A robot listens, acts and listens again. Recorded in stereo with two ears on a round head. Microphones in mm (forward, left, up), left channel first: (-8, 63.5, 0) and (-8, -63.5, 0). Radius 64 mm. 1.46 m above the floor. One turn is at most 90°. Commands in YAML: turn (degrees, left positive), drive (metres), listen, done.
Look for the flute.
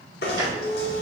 turn: 30
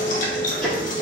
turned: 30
listen: true
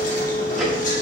turn: 90
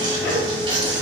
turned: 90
turn: 55
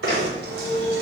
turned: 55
done: "Found it: a flute, straight ahead."